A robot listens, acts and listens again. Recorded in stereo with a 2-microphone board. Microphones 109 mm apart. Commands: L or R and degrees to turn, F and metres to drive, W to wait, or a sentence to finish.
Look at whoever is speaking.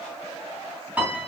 W
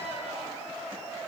W
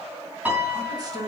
R35
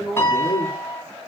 L10
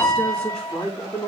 L15
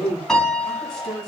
Facing the man speaking.